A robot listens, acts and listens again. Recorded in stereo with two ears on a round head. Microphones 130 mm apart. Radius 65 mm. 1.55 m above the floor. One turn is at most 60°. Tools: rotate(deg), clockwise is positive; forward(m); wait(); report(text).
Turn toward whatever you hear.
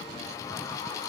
wait()
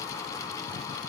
wait()
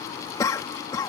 rotate(-25)
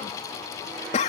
rotate(-60)
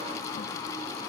rotate(-60)
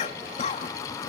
rotate(-45)
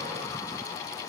wait()
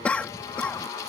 rotate(-10)
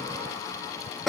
report("Found it: a cough, straight ahead.")